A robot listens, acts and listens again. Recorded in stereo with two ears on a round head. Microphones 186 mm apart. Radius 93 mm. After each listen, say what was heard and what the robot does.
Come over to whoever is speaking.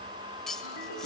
Keep listening.
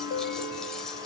Keep listening.
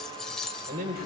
The man speaking: about 45° right or 135° right. Turn 45° right.
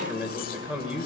So it is at 10° right. Turn 10° right.
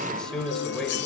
Drive 1.0 m forward.
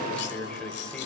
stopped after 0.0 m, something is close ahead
Something is in my way. I am facing the man speaking but have not reached it.